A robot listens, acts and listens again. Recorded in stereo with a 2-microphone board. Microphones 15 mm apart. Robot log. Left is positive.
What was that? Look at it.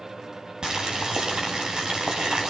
note: The boiling: about 55° right or 125° right.
cmd yaw -55
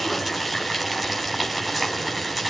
end: Found it: boiling, straight ahead, over 4 m away.